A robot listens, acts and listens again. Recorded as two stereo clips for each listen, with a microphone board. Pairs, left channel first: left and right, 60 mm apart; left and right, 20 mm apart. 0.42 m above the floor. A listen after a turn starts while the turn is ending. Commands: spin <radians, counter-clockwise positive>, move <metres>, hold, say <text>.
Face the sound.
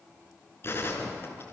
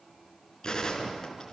spin 0.70
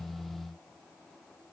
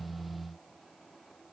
hold
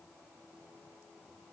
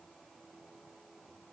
say I heard a gunshot, but can't make it out now. It was about straight ahead or 100° left.